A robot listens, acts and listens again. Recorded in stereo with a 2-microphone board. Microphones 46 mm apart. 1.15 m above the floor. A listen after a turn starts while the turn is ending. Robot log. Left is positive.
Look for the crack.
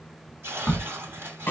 cmd yaw +30
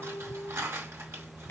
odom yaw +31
cmd idle
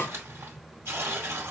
end: I heard a crack, but can't make it out now. It was about 20° right or 140° left.